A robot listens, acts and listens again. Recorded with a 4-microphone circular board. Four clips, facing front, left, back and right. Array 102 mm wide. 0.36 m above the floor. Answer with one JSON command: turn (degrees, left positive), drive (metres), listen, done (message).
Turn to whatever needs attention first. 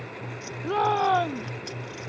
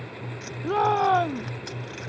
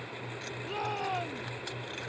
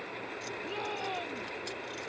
{"turn": 55}
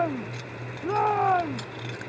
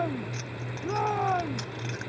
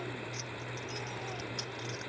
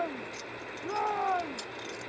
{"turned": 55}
{"done": "Found it: a shout, straight ahead."}